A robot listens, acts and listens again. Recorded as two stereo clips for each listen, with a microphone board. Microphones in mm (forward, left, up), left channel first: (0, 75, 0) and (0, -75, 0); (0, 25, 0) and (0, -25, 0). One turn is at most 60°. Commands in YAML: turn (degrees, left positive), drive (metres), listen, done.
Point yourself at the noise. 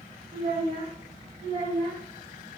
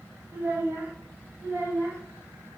turn: -60
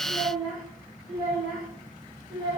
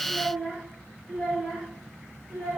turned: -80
done: "Facing the child speaking."